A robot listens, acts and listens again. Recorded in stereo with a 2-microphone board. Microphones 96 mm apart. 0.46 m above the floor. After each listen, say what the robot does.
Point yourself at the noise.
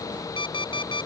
Turn 55° left.
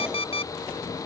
Turn 70° left.
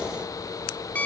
Turn 15° left.
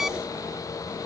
Found it: an alarm clock, straight ahead.